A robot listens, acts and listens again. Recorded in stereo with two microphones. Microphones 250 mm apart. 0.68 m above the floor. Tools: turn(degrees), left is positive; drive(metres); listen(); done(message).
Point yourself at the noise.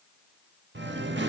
turn(degrees=-45)
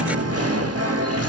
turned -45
turn(degrees=-85)
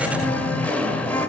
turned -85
done("Facing the singing.")